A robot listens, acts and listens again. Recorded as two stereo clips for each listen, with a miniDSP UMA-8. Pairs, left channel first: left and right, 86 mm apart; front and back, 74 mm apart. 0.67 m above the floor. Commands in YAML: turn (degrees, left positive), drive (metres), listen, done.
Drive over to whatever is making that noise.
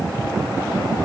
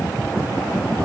listen: true
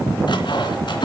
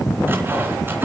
turn: 120
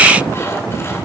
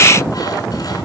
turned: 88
turn: 30
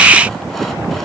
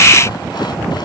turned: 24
listen: true
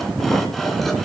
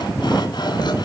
done: "Facing where the sawing came from. I can't hear it now. I did not reach it."